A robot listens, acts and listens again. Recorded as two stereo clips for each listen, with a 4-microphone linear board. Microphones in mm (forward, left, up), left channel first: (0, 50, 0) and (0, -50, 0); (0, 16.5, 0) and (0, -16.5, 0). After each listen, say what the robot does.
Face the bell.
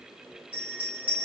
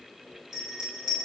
Turn 30° right.
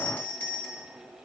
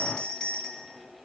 Turn 20° left.
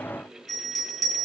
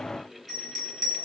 Facing the bell, 1 to 2 m away.